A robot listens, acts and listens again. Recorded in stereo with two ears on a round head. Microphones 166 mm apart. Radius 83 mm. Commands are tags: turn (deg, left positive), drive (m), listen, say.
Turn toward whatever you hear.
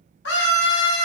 <turn deg="65"/>
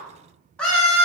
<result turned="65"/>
<say>Found it: a scream, straight ahead.</say>